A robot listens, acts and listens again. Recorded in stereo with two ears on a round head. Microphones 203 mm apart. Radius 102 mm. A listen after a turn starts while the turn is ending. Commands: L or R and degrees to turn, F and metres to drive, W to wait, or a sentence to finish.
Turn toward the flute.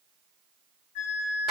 L50
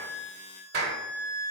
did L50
L65
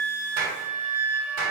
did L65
L10
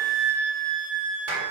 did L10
Facing the flute.